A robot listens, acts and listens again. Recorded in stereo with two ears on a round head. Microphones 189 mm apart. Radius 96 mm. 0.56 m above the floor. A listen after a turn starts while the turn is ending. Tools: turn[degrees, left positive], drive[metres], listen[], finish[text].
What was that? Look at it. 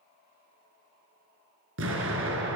Thought: The explosion: about 65° right or 115° right.
Action: turn[-65]
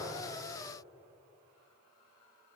Action: listen[]
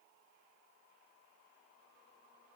Action: finish[I heard an explosion, but can't make it out now. It was about straight ahead or 50° right.]